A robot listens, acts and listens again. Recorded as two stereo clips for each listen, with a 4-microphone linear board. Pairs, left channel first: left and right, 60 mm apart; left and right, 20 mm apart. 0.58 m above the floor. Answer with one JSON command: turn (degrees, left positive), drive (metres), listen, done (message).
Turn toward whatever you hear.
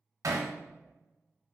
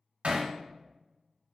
{"turn": -90}
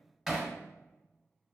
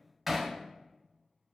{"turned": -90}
{"done": "Facing the hammering, under 1 m away."}